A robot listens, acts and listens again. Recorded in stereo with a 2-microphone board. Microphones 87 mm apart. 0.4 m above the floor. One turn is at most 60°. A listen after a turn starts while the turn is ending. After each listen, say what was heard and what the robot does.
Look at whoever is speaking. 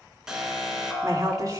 The woman speaking: about 45° right or 135° right. Turn 45° right.
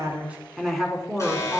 Found it: a woman speaking, straight ahead.